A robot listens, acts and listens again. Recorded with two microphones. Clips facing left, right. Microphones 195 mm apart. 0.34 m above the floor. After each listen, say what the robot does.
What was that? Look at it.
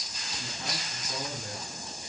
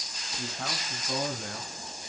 Turn 70° right.
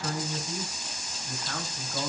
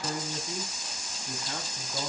Turn 20° right.
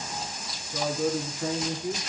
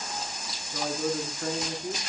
Facing the man speaking.